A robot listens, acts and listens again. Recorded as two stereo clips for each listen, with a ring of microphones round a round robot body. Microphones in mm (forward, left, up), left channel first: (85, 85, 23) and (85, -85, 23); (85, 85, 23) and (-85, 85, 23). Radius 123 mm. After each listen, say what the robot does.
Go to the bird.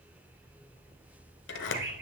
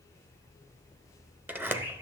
Turn 105° right.
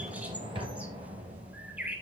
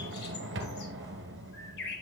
Turn 10° right.
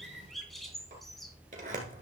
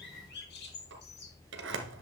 Drive 1.0 m forward.
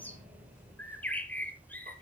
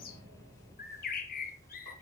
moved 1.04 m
Turn 10° left.
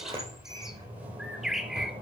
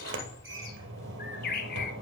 Drive 1.0 m forward.
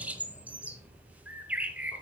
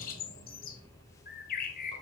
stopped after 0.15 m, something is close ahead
Turn 10° right.
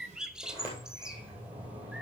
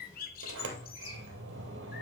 Arrived at the bird, straight ahead.